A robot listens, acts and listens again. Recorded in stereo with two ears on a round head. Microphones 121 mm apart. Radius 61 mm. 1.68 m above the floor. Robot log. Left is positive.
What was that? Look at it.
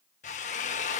note: The drill: about 60° left or 120° left.
cmd yaw +60
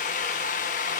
note: So it is at 60° left.
cmd yaw +60
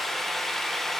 end: Found it: a drill, straight ahead.